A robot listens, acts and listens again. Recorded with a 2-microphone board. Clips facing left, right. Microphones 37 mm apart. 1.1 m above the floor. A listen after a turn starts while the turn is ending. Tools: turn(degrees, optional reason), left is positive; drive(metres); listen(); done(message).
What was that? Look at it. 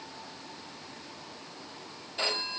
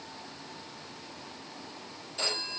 turn(degrees=20, reason="The phone ringing: about 20° left or 160° left.")
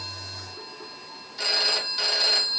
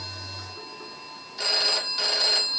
done("Found it: a phone ringing, straight ahead, 2 to 4 m away.")